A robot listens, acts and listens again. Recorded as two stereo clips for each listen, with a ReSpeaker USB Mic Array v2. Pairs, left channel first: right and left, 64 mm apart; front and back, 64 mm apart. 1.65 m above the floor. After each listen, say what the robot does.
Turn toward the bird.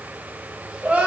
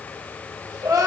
Keep listening.
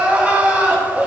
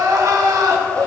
Keep listening.
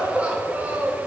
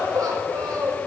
I can't make out a bird to turn to.